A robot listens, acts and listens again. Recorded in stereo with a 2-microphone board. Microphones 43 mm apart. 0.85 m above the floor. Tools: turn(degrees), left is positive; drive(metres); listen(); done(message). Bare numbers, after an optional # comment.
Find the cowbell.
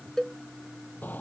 turn(30)
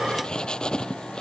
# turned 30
listen()
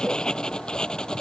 listen()
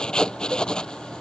done("I heard a cowbell, but can't make it out now. It was about 20° right or 140° left.")